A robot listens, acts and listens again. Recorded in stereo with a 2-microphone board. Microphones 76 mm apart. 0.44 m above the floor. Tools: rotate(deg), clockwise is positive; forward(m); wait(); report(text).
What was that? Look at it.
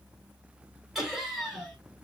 rotate(-30)
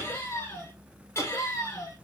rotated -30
rotate(-135)
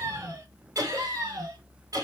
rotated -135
rotate(50)
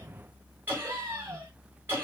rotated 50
rotate(30)
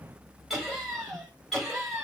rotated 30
report("Facing the laughter, 1 to 2 m away.")